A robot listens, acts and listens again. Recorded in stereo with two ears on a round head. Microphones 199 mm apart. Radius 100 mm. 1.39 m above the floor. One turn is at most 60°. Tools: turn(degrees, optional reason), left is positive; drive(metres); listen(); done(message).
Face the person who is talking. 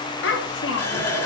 turn(degrees=60, reason="The child speaking: about 60° left or 120° left.")
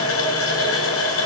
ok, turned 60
listen()
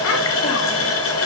listen()
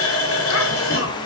done("I heard a child speaking, but can't make it out now. It was about straight ahead or 60° left.")